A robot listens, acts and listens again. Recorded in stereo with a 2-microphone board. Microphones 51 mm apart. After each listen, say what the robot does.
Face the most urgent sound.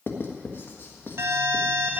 Turn 65° right.
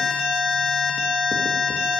Found it: an alarm, straight ahead, 2 to 4 m away.